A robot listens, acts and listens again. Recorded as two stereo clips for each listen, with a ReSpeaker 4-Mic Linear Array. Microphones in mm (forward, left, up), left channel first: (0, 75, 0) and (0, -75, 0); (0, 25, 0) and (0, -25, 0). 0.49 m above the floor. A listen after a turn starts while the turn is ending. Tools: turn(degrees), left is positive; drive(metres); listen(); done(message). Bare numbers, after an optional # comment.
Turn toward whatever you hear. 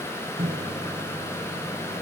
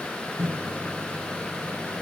# The microwave: about 65° right or 115° right.
turn(-65)
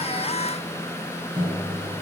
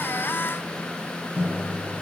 # So it is at 40° right.
turn(-40)
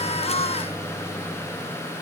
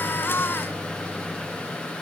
listen()
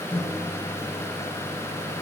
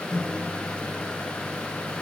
# The microwave is now 10° left.
turn(10)
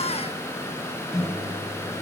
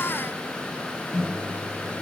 done("Found it: a microwave, straight ahead, 1 to 2 m away.")